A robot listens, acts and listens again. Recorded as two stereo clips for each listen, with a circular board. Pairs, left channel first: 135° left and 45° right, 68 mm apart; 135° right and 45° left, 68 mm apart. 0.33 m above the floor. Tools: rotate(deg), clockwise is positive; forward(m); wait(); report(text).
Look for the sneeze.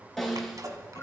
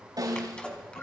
rotate(65)
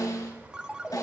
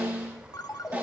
report("Facing where the sneeze came from. I can't hear it now.")